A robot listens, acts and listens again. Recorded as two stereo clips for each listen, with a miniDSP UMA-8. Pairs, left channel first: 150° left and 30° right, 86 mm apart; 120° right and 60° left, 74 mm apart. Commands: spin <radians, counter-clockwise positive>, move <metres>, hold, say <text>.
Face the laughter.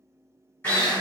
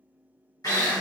hold
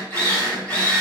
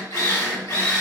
hold
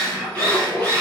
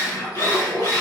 spin -2.27
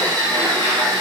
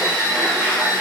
hold
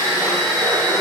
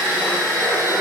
hold
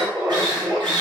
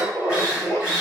spin -1.40
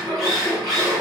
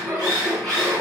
spin -0.17
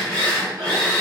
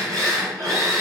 hold
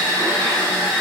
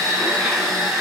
hold
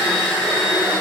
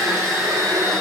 say I heard laughter from this way, but can't make it out now.